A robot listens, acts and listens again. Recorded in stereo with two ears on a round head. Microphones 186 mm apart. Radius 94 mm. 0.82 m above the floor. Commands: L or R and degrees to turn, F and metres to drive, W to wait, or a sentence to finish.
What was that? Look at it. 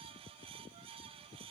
W
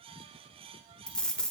L30
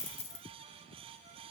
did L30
L145
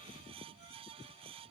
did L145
Facing where the dropped coin came from. I can't hear it now.